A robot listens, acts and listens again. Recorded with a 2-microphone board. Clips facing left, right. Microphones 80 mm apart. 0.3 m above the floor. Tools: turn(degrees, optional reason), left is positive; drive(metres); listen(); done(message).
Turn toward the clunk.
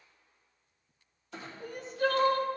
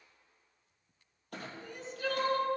turn(degrees=-60, reason="The clunk: about 60° right or 120° right.")
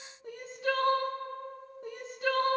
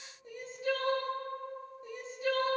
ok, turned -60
listen()
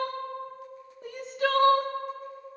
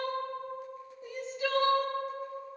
done("I heard a clunk, but can't make it out now. It was about straight ahead or 60° right.")